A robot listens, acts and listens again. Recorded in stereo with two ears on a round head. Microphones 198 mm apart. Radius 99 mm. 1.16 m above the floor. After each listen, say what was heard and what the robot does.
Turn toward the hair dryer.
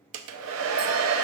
The hair dryer: about 70° right or 110° right. Turn 70° right.
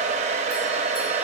So it is at 35° right. Turn 35° right.
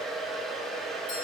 Facing the hair dryer, under 1 m away.